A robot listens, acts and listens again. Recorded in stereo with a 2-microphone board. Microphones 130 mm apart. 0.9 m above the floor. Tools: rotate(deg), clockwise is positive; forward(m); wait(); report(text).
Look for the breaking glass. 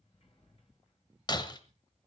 rotate(-35)
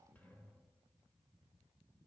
wait()
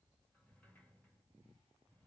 report("I heard breaking glass, but can't make it out now. It was about straight ahead or 110° left.")